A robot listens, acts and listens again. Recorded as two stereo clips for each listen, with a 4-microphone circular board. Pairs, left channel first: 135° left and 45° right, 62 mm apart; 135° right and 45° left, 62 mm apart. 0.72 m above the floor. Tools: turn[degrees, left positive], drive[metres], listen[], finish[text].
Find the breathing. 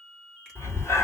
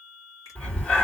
Thought: The breathing: 160° left.
Action: turn[160]
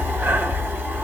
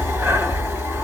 Thought: The breathing is now 10° left.
Action: turn[10]
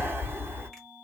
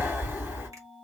Action: finish[Facing the breathing.]